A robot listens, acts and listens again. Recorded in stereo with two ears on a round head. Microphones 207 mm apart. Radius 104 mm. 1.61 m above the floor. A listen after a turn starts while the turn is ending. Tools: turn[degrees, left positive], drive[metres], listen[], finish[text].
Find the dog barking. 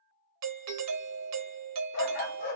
Thought: The dog barking: about 35° left or 145° left.
Action: turn[35]
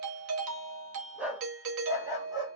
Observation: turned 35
Thought: So it is at 15° right.
Action: turn[-15]
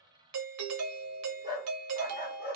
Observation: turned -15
Thought: The dog barking is now 25° right.
Action: turn[-25]
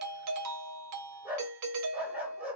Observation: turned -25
Action: finish[Found it: a dog barking, straight ahead.]